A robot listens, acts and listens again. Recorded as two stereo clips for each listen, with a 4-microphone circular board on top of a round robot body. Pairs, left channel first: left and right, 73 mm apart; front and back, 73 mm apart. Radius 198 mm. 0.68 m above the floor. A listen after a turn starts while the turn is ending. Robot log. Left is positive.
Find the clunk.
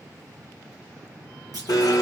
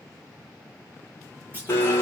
note: The clunk: 115° right.
cmd yaw -115
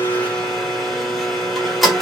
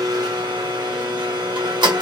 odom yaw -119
end: I heard a clunk from this way, but can't make it out now.